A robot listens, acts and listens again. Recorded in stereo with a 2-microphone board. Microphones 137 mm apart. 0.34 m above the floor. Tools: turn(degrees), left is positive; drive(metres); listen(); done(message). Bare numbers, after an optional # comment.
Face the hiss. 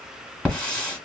turn(30)
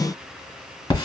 # So it is at 140° left.
turn(140)
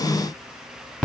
done("Found it: a hiss, straight ahead, 1 to 2 m away.")